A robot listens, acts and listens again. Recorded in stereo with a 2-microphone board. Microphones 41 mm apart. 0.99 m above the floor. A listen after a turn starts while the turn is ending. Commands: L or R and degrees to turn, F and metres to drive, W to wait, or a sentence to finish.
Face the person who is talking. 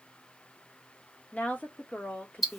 L40
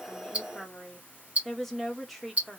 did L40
Facing the woman speaking, under 1 m away.